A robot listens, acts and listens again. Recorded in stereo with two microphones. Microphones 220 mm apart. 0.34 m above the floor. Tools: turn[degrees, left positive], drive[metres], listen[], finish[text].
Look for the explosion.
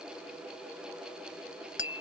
Action: listen[]
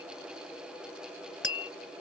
Action: listen[]
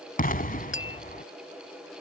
Thought: The explosion: about 40° left or 140° left.
Action: turn[40]
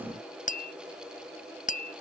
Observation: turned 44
Action: listen[]
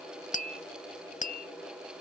Action: finish[I heard an explosion, but can't make it out now. It was about 5° right or 95° left.]